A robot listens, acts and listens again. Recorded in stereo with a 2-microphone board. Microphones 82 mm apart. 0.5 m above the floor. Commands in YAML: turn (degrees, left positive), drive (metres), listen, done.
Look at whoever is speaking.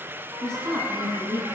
turn: -40
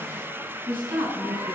turn: -100
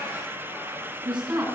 turn: -15
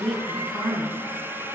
done: "Facing the woman speaking, 2 to 4 m away."